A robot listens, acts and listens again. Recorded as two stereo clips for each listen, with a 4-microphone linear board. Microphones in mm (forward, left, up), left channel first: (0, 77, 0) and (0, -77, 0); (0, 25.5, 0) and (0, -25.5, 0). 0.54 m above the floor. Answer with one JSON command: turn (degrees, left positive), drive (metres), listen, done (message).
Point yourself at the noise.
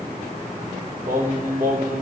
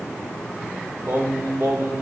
{"turn": -70}
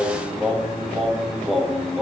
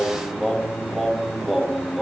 {"done": "Found it: singing, straight ahead, 1 to 2 m away."}